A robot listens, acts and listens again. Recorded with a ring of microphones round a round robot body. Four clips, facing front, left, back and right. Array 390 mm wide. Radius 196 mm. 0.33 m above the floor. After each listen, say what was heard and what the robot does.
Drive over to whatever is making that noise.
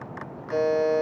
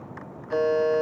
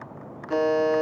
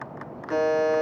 The buzzer: 130° right. Turn 130° right.
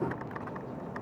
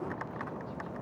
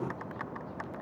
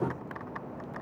Keep listening.
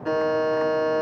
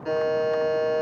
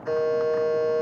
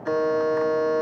The buzzer is now 10° left. Turn 10° left.
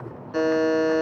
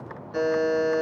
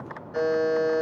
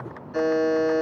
Drive 1.0 m forward.
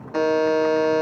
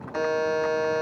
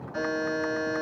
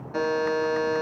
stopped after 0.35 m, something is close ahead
Something is in my way. I am facing the buzzer but have not reached it.